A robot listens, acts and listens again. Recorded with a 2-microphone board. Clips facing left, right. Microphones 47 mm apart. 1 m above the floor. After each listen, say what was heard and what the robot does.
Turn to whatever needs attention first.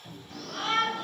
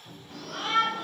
The shout: about 25° right or 155° right. Turn 25° right.
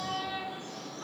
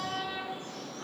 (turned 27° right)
So it is at 125° right. Turn 125° right.
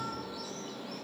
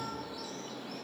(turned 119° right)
Found it: a shout, straight ahead, 1 to 2 m away.